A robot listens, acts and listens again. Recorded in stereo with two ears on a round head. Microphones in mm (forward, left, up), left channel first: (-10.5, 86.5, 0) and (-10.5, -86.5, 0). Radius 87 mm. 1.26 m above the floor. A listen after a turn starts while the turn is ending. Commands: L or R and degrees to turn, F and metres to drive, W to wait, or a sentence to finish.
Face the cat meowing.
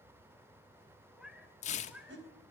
R30
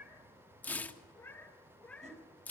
L30
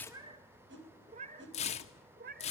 R50
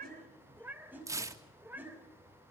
R10
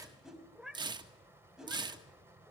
Found it: a cat meowing, straight ahead.